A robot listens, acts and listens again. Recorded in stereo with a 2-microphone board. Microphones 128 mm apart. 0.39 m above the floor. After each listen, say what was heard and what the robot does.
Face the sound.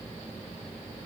Keep listening.
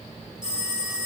Turn 30° right.
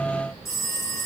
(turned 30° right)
So it is at 20° left. Turn 20° left.
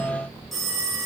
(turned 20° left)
Facing the phone ringing, over 4 m away.